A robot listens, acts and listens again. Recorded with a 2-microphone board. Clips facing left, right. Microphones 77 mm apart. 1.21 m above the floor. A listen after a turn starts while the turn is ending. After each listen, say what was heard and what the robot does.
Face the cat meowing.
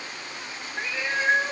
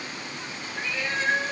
The cat meowing: about 20° left or 160° left. Turn 20° left.
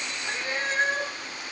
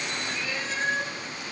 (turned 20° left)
So it is at 135° left. Turn 135° left.
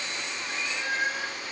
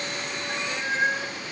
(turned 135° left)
The cat meowing is now 30° right. Turn 30° right.
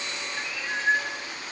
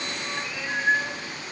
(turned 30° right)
The cat meowing is now 10° right. Turn 10° right.
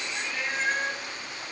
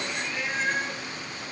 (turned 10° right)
Found it: a cat meowing, straight ahead.